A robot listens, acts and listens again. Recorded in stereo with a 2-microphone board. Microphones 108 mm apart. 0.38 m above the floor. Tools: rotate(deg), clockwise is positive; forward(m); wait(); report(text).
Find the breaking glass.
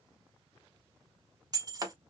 rotate(35)
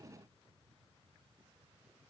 wait()
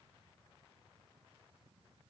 report("I heard breaking glass, but can't make it out now. It was about straight ahead or 110° right.")